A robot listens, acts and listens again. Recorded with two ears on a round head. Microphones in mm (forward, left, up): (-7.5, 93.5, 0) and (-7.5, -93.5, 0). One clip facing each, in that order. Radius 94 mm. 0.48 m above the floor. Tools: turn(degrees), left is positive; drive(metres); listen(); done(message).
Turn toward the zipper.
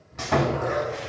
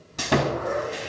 turn(degrees=65)
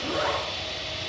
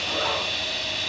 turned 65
listen()
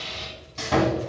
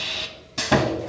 listen()
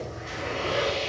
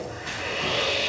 done("I heard a zipper, but can't make it out now. It was about straight ahead or 50° left.")